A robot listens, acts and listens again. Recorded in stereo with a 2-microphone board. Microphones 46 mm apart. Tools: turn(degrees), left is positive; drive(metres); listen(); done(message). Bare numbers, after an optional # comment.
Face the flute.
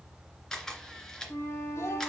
# The flute: about 65° left or 115° left.
turn(65)
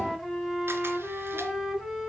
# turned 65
done("Facing the flute, 2 to 4 m away.")